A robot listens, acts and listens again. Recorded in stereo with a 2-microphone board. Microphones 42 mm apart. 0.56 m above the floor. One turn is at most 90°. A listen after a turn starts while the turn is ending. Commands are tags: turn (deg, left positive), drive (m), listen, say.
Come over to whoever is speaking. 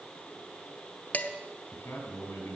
<turn deg="90"/>
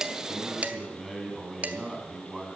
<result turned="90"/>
<drive m="1.0"/>
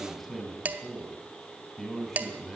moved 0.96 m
<drive m="1.0"/>
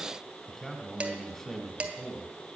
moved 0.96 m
<turn deg="10"/>
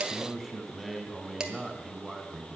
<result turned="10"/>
<drive m="1.0"/>
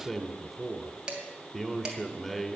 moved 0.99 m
<drive m="1.0"/>
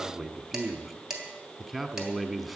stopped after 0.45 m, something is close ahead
<say>I am next to the man speaking.</say>